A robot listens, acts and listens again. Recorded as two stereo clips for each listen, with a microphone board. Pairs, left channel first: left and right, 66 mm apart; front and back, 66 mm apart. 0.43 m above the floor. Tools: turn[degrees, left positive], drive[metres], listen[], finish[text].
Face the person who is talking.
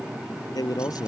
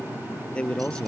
Thought: The man speaking: 75° left.
Action: turn[75]
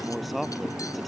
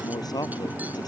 Action: finish[Facing the man speaking.]